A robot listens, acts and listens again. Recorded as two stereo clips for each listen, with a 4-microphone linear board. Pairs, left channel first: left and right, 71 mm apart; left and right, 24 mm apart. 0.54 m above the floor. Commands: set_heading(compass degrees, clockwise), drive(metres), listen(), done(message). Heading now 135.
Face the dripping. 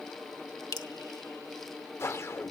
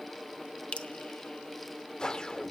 set_heading(70)
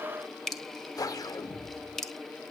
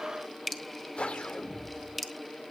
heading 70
done("Facing the dripping.")